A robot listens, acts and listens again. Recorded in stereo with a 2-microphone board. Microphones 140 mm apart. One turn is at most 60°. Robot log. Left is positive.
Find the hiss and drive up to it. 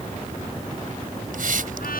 note: The hiss: about 70° right or 110° right.
cmd yaw -60
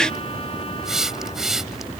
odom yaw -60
cmd fwd 1.0
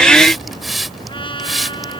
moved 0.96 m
cmd fwd 1.0
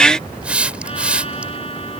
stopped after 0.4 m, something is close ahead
note: The hiss is now 10° right.
cmd yaw -10
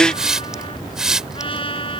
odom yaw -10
end: Blocked. The hiss is further on, straight ahead.